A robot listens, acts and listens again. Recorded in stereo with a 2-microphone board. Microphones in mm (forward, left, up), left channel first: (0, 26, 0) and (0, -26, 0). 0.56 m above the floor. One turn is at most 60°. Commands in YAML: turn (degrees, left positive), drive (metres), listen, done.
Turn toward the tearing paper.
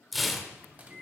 turn: 30
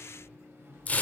turn: 60
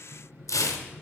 turn: 60
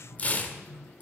turn: 30
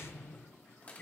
listen: true
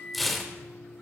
done: "Facing the tearing paper."